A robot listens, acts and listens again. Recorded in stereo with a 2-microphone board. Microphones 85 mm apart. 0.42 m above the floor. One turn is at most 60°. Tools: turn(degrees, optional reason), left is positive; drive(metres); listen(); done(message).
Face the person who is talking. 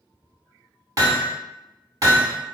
listen()
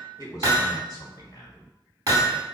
turn(degrees=45, reason="The man speaking: about 45° left or 135° left.")
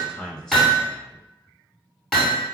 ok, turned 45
turn(degrees=10, reason="So it is at 10° left.")
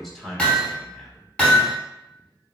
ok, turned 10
done("Found it: a man speaking, straight ahead, 1 to 2 m away.")